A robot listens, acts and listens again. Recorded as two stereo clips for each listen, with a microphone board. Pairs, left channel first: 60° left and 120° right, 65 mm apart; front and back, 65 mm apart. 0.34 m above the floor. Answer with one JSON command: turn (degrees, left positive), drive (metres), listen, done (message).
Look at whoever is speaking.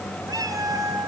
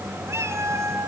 {"listen": true}
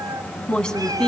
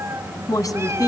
{"turn": -10}
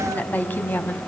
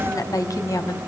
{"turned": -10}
{"done": "Found it: a woman speaking, straight ahead."}